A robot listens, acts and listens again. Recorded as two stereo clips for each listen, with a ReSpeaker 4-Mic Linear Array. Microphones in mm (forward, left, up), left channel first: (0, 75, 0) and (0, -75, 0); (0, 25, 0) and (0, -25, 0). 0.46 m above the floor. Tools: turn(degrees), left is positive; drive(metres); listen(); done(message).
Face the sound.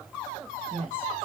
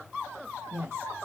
turn(degrees=-60)
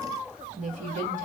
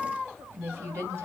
turn(degrees=-60)
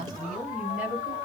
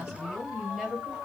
turn(degrees=-10)
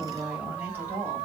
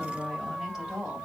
turn(degrees=-15)
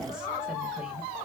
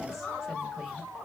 listen()
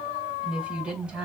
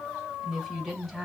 done("Facing the woman speaking.")